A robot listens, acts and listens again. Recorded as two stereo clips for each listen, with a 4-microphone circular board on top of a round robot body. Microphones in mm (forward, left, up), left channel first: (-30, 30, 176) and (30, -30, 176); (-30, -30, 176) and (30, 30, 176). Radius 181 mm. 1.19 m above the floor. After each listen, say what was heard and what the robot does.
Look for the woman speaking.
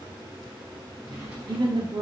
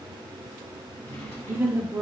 The woman speaking: 15° right. Turn 15° right.
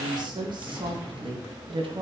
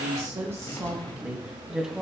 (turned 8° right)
The woman speaking is now 45° right. Turn 45° right.
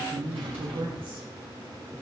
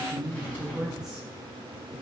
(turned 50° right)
The woman speaking is now 35° right. Turn 35° right.
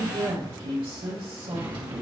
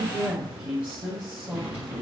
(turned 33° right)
The woman speaking is now 30° right. Turn 30° right.
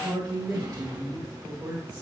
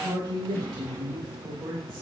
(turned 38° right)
Found it: a woman speaking, straight ahead.